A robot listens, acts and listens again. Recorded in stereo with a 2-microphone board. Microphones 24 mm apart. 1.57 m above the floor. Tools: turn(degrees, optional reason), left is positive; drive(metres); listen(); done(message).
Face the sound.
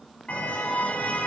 turn(degrees=70, reason="The car horn: about 70° left or 110° left.")
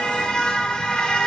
turn(degrees=45, reason="So it is at 45° left.")
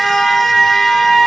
turn(degrees=10, reason="The car horn is now 10° left.")
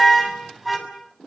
done("Facing the car horn, over 4 m away.")